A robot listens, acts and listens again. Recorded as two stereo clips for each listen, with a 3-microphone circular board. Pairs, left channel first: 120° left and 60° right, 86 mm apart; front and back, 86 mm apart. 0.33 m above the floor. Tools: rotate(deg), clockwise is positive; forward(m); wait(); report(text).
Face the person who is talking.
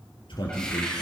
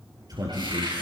rotate(-140)
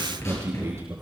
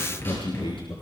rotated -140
report("Found it: a man speaking, straight ahead, over 4 m away.")